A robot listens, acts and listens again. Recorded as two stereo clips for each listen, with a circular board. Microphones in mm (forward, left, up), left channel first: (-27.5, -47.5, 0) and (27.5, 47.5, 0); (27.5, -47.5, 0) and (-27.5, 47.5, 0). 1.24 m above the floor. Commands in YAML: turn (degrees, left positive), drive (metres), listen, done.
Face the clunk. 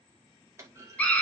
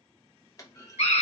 done: "Found it: a clunk, straight ahead, 1 to 2 m away."